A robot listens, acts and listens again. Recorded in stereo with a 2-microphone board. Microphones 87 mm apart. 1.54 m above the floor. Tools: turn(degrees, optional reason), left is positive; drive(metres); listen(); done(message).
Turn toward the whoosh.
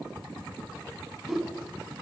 turn(degrees=-30)
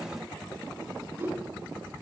turn(degrees=-150, reason="So it is at 150° right.")
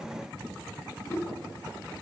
turn(degrees=40, reason="The whoosh is now 40° left.")
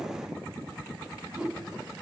done("Facing the whoosh.")